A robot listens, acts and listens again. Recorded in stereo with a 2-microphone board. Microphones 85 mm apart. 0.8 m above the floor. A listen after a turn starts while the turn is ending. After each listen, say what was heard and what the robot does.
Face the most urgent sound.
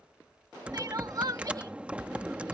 The crying: about 45° right or 135° right. Turn 45° right.
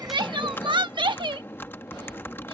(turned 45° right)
So it is at 85° right. Turn 85° right.
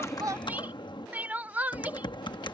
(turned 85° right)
The crying is now 20° right. Turn 20° right.
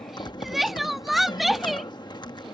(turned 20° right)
Facing the crying.